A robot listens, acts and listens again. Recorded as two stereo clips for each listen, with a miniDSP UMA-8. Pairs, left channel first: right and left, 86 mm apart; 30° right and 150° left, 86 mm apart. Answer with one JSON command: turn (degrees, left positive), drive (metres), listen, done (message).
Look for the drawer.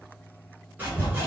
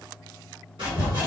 {"listen": true}
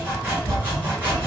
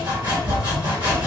{"listen": true}
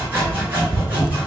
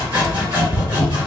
{"done": "I can't make out a drawer, only sawing."}